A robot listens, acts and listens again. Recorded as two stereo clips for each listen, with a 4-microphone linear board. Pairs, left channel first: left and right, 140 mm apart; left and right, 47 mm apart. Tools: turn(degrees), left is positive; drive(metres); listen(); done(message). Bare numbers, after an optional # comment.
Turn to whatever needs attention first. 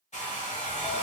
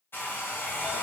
listen()
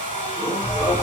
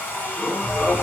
# The alarm: about 65° left or 115° left.
turn(65)
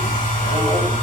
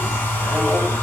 # So it is at 15° left.
turn(15)
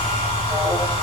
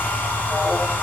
done("Found it: an alarm, straight ahead, 1 to 2 m away.")